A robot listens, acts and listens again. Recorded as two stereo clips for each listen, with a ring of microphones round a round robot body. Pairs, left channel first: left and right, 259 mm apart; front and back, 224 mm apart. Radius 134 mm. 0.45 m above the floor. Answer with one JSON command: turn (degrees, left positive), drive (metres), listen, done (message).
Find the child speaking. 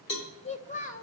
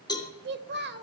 {"turn": 145}
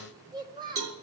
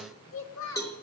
{"turn": -20}
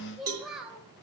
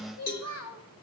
{"done": "Facing the child speaking, 2 to 4 m away."}